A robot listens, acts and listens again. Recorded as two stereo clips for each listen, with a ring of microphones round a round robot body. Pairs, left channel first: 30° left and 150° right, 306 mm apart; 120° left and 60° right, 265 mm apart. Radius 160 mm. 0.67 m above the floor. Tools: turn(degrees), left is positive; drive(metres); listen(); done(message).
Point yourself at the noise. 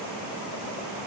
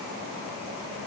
listen()
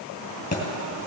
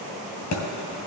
turn(degrees=95)
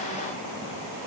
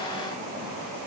done("I heard a thud from this way, but can't make it out now.")